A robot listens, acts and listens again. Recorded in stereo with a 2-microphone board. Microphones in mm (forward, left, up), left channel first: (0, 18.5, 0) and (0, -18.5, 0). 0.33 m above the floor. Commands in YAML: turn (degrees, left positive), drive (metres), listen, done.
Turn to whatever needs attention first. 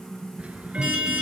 turn: -20
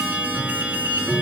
turn: -140
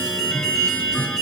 turn: 10
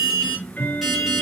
done: "Facing the alarm."